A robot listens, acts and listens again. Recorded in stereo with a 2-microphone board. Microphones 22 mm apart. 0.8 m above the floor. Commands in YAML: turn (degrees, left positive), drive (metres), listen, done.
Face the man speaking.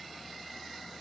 listen: true
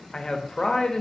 turn: 35
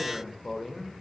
done: "Facing the man speaking, under 1 m away."